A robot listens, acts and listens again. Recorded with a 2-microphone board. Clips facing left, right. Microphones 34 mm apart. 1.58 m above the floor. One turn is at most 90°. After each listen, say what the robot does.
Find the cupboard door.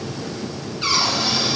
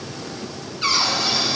Turn 30° left.
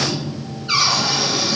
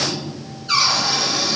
Turn 90° left.
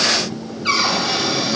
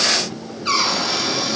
Turn 75° left.
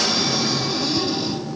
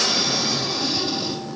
Turn 20° right.
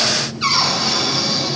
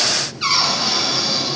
Facing the cupboard door.